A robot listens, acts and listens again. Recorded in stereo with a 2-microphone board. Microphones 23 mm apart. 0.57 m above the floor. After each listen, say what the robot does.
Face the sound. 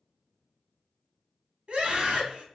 Turn 55° right.
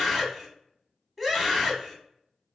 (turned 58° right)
Turn 15° right.
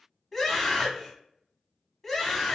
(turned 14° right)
Facing the scream, 1 to 2 m away.